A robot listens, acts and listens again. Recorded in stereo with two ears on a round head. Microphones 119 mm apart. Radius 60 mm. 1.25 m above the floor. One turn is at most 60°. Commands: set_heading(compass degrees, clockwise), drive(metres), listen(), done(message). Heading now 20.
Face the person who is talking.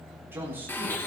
set_heading(40)
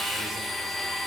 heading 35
listen()
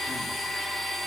listen()
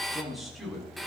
done("Found it: a man speaking, straight ahead.")